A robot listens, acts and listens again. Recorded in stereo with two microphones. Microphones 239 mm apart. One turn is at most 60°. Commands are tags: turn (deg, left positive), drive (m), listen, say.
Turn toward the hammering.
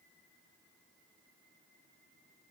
<listen/>
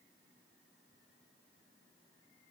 <listen/>
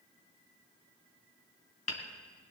<turn deg="60"/>
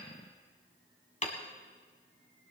<turn deg="30"/>
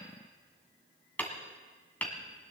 <say>Found it: hammering, straight ahead.</say>